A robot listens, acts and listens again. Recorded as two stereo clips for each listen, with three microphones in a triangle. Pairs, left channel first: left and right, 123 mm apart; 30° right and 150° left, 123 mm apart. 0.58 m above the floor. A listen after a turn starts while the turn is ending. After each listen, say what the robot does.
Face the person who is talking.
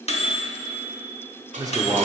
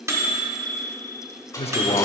Turn 35° right.
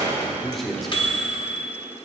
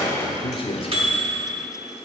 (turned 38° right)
Found it: a man speaking, straight ahead, 1 to 2 m away.